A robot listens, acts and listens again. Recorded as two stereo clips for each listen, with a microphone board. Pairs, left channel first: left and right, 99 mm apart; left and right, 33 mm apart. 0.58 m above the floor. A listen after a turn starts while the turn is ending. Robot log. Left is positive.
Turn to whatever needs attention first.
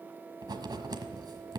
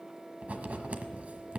cmd idle
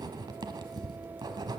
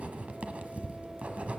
cmd idle
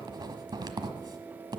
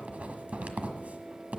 end: I can't make out anything urgent, only writing.